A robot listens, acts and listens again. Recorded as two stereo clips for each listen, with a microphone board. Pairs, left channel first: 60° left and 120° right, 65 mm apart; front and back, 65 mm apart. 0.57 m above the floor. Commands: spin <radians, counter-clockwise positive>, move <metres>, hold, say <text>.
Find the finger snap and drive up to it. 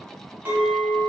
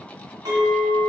hold
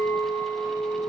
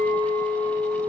hold
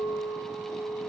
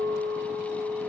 say I can't make out a finger snap, only a clink.